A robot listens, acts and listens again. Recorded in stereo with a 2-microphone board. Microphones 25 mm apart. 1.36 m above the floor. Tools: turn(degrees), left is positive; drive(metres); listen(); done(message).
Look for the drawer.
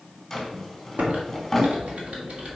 turn(degrees=30)
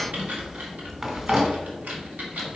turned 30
turn(degrees=-20)
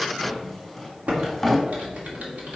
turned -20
done("Found it: a drawer, straight ahead, 2 to 4 m away.")